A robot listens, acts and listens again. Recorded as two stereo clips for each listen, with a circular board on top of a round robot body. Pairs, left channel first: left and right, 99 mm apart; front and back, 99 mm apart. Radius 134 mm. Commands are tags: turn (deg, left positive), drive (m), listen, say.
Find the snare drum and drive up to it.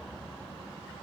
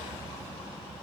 <listen/>
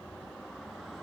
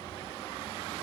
<listen/>
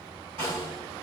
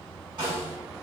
<turn deg="-125"/>
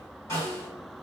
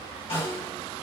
<turn deg="25"/>
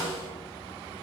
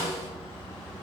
<turn deg="-10"/>
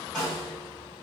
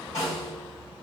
<drive m="1.0"/>
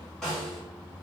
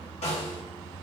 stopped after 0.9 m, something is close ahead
<say>Arrived at the snare drum, straight ahead.</say>